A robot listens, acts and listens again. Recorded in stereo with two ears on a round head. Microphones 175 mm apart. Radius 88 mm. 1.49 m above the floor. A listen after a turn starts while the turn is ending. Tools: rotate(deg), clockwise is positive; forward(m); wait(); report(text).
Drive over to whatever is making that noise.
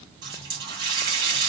rotate(25)
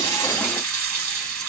rotate(130)
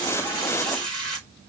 forward(1.0)
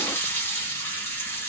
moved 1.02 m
rotate(-10)
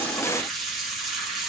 forward(1.0)
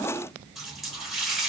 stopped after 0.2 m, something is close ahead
report("Arrived at the running tap, straight ahead.")